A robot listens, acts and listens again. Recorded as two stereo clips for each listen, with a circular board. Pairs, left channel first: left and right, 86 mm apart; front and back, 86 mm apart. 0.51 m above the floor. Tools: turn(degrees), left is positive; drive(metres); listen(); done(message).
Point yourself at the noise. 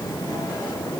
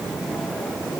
listen()
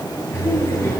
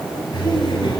turn(degrees=30)
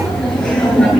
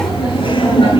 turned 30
turn(degrees=10)
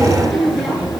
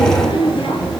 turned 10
done("Facing the laughter.")